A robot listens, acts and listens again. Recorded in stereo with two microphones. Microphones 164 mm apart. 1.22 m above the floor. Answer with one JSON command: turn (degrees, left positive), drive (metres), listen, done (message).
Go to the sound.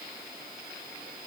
{"listen": true}
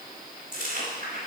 {"turn": -55}
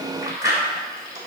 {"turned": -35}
{"turn": -20}
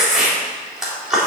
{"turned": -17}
{"drive": 1.0}
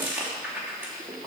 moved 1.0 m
{"turn": -10}
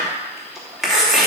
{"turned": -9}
{"drive": 1.0}
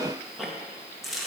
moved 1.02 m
{"drive": 1.0}
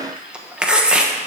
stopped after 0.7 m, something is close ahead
{"done": "I am next to the chewing."}